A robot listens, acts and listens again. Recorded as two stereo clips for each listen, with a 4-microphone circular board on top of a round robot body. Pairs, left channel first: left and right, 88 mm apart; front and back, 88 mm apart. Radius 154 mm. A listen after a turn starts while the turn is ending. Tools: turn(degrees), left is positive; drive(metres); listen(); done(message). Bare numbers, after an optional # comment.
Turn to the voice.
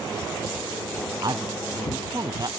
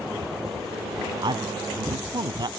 # The man speaking: 135° right.
turn(-135)
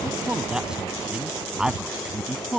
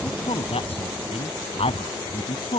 # The man speaking is now 10° right.
turn(-10)
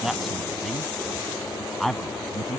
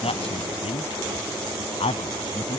done("Facing the man speaking.")